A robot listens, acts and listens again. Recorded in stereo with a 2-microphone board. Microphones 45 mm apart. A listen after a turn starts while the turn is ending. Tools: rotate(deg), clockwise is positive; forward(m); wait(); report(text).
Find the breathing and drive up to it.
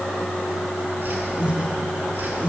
rotate(30)
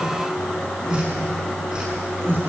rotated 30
rotate(120)
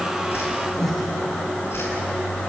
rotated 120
rotate(-10)
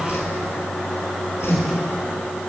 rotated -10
forward(1.0)
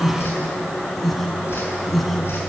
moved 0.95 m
forward(1.0)
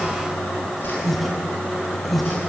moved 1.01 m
forward(1.0)
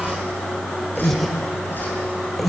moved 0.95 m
forward(1.0)
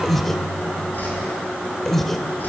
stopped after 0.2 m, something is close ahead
rotate(-10)
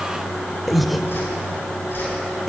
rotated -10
report("Arrived at the breathing, straight ahead.")